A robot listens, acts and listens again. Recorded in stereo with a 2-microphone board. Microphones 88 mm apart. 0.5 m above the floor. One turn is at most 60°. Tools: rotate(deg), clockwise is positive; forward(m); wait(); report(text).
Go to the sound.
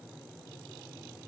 wait()
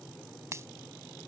rotate(30)
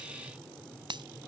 rotate(60)
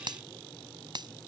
rotate(60)
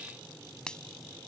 rotate(-10)
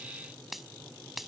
forward(1.0)
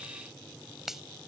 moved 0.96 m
forward(1.0)
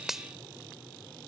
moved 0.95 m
forward(1.0)
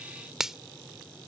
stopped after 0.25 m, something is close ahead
report("I am next to the finger snap.")